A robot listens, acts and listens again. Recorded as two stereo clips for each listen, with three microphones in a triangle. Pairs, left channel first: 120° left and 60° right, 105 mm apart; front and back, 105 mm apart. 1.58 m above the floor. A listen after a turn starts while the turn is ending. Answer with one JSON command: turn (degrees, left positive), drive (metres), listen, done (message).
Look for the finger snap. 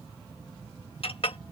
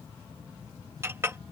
{"listen": true}
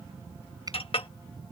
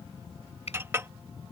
{"listen": true}
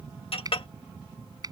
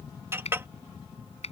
{"done": "Found it: a finger snap, straight ahead."}